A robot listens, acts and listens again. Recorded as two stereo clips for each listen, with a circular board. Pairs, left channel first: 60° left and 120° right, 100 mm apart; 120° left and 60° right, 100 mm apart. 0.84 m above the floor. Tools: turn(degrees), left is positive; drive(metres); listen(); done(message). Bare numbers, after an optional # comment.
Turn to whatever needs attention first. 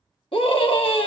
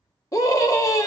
# The scream: 65° left.
turn(65)
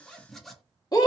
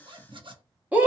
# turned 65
# The scream is now 15° left.
turn(15)
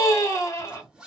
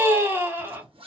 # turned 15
done("Found it: a scream, straight ahead.")